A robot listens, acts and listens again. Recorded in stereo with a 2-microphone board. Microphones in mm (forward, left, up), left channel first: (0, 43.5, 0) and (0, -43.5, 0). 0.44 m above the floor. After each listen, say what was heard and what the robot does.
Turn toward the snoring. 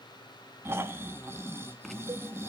The snoring: about 30° right or 150° right. Turn 30° right.
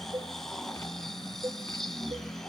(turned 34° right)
Facing the snoring.